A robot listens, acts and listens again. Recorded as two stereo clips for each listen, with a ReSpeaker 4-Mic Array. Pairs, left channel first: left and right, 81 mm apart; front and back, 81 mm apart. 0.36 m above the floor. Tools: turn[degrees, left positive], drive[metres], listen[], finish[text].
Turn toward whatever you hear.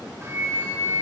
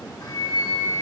Thought: The flute: 35° right.
Action: turn[-35]
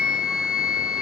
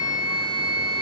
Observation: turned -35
Thought: The flute is now 10° right.
Action: turn[-10]
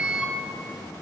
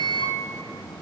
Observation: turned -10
Action: finish[Facing the flute, 2 to 4 m away.]